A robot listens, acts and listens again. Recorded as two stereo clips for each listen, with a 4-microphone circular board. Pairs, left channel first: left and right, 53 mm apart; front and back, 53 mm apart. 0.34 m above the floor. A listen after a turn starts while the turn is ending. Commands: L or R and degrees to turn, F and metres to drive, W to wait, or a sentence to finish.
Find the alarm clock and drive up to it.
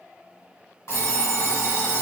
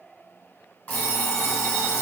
L60
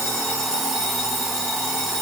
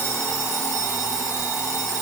F1.0
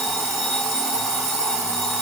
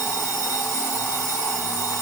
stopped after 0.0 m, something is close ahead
Something is in my way. I am facing the alarm clock but have not reached it.